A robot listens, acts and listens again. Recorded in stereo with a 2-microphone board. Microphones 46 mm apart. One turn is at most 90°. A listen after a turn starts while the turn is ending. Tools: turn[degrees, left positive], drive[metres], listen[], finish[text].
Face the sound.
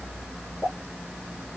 Thought: The pop: about 25° left or 155° left.
Action: turn[25]
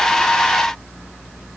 Action: listen[]
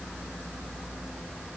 Action: finish[I heard a pop, but can't make it out now. It was about straight ahead or 130° left.]